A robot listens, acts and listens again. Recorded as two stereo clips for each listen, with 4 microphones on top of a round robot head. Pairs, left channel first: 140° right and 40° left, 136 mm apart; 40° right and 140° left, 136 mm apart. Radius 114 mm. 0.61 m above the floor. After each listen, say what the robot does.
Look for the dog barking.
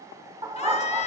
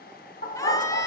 Turn 25° right.
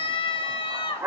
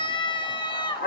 Turn 30° right.
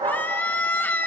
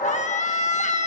Turn 10° right.
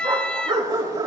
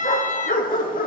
Turn 20° right.
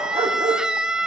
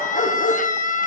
Turn 10° right.
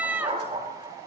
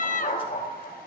Turn 10° right.
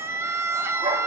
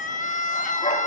Facing the dog barking, over 4 m away.